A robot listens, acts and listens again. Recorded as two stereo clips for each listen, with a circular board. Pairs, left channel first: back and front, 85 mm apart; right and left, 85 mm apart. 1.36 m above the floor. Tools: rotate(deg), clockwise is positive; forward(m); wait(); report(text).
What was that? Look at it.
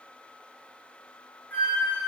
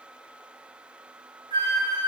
rotate(-110)
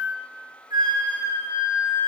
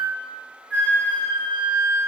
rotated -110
rotate(15)
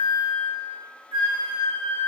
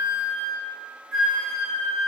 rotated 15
report("Facing the flute, 1 to 2 m away.")